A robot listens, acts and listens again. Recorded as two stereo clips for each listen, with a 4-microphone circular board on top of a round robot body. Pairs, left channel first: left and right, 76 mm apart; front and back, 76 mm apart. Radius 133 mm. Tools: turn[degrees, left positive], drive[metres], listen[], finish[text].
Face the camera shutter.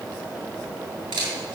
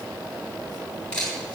Thought: The camera shutter: 75° right.
Action: turn[-75]
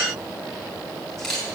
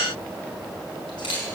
Action: finish[Facing the camera shutter, over 4 m away.]